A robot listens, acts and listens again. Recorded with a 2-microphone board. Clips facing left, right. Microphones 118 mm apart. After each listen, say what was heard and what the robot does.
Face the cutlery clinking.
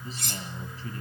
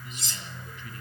The cutlery clinking: about 60° left or 120° left. Turn 60° left.
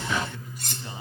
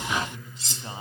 So it is at 55° left. Turn 55° left.
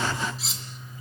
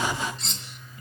Facing the cutlery clinking.